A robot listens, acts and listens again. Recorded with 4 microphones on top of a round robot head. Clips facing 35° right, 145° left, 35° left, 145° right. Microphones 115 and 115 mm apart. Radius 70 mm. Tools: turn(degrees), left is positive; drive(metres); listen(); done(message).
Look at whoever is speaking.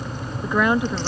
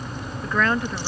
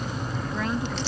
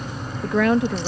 turn(degrees=-115)
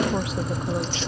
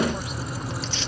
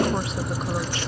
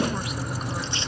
listen()
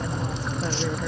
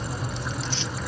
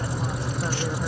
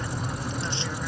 listen()
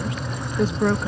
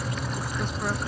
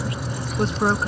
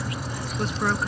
turn(degrees=-25)
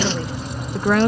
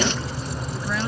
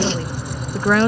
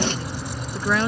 done("Found it: a woman speaking, straight ahead.")